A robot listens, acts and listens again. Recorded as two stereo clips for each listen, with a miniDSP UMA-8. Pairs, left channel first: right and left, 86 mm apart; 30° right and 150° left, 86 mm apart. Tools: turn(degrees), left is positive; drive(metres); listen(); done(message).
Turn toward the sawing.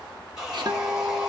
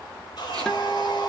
done("Facing the sawing.")